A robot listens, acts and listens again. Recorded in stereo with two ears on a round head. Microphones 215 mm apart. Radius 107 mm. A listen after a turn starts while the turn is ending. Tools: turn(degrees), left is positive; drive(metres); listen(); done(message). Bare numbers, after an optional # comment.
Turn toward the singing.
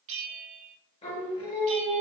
# The singing: about 25° left or 155° left.
turn(25)
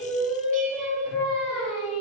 done("Facing the singing.")